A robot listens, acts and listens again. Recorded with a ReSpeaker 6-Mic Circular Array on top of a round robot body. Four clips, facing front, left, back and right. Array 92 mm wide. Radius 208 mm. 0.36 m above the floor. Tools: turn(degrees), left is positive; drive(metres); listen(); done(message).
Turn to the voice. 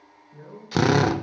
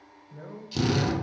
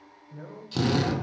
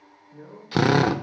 turn(degrees=135)
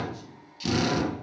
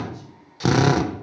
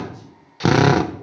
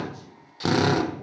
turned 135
listen()
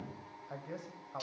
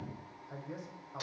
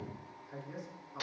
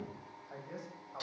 done("Facing the man speaking.")